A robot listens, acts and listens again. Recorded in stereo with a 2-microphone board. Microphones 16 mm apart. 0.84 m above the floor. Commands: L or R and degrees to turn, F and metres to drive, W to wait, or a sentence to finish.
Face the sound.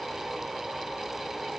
W
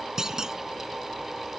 R30
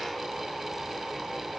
W
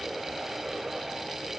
I heard a clunk, but can't make it out now. It was about straight ahead or 120° right.